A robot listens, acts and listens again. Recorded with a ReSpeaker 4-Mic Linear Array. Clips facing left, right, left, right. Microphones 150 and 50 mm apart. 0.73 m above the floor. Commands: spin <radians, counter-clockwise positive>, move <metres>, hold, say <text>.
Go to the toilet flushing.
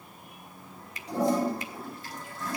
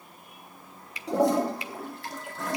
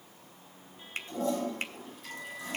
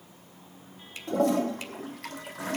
spin -1.31
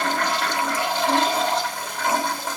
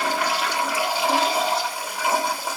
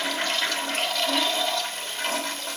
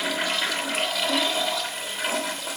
spin -0.17
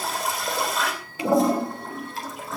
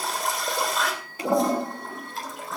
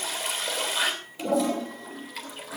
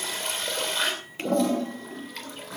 move 1.0
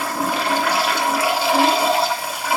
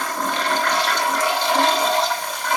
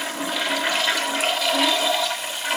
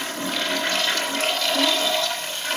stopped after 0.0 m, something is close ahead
spin 0.17
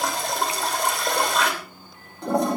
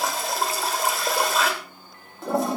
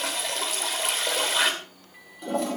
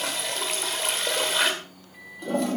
say Blocked. The toilet flushing is further on, straight ahead.